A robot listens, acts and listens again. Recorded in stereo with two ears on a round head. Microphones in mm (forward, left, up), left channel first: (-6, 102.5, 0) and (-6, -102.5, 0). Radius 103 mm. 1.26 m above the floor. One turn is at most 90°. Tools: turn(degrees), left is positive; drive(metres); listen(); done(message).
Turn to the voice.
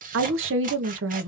turn(degrees=-55)
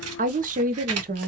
turn(degrees=-45)
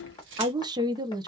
turn(degrees=-20)
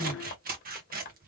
listen()
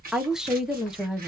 done("Facing the woman speaking.")